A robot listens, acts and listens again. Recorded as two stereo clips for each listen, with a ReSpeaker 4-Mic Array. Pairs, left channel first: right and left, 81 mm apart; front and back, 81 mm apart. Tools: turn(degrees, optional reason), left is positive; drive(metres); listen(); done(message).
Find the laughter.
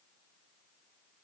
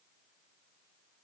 listen()
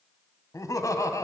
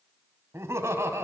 turn(degrees=-130, reason="The laughter: 130° right.")
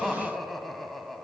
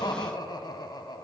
done("Facing the laughter.")